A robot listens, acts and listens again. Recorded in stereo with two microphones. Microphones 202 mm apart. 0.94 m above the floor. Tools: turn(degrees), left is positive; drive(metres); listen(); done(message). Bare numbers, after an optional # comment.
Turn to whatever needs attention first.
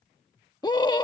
# The scream: about 20° left or 160° left.
turn(20)
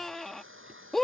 done("Found it: a scream, straight ahead.")